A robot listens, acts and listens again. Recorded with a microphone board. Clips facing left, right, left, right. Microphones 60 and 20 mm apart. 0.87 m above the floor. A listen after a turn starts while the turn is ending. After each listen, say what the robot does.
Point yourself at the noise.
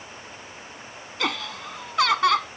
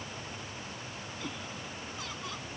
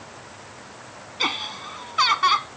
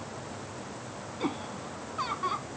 Turn 90° left.
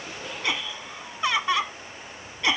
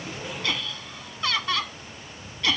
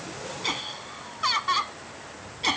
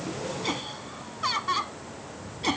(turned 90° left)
Turn 20° left.
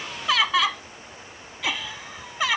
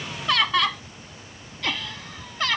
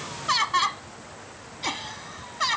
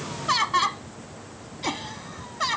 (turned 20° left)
Turn 10° left.
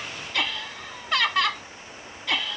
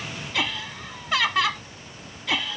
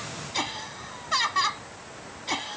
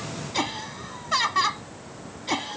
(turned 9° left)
Facing the laughter.